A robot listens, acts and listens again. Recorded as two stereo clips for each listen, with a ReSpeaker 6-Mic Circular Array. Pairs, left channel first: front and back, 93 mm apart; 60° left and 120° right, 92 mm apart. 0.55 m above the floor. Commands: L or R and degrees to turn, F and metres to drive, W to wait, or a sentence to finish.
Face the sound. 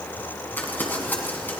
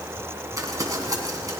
R70
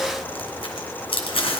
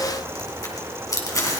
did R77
Facing the crumpling.